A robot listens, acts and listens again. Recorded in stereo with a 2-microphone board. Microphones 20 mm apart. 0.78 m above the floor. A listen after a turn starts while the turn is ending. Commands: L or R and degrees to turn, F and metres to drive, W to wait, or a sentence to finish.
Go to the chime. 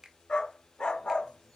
W
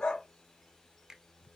W
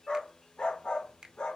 I can't make out a chime to turn to.